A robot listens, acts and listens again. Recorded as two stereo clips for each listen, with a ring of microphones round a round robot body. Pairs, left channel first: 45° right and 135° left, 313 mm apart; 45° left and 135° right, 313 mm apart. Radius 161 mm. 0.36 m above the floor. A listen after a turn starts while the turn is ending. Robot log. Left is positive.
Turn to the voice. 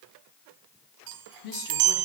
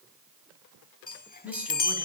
note: The woman speaking: 50° right.
cmd yaw -50
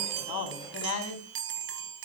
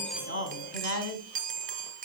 end: Facing the woman speaking.